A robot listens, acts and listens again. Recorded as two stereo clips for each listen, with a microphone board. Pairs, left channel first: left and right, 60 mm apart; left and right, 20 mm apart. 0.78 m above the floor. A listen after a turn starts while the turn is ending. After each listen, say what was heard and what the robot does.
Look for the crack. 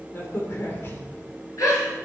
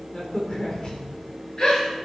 The crack: about 45° left or 135° left. Turn 45° left.
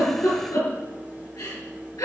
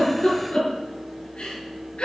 Keep listening.
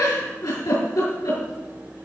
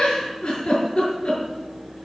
I heard a crack, but can't make it out now. It was about straight ahead or 90° left.